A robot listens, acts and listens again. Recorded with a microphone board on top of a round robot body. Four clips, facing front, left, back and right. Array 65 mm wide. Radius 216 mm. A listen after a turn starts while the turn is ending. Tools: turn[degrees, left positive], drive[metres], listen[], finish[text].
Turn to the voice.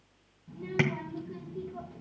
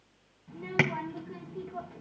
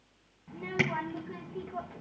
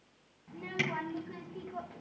Thought: The child speaking: 170° right.
Action: turn[-170]
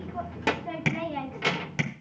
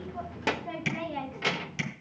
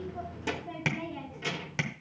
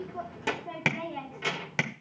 Thought: The child speaking is now 20° left.
Action: turn[20]
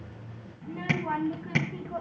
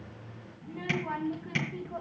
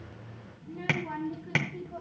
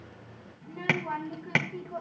Action: finish[Found it: a child speaking, straight ahead, 1 to 2 m away.]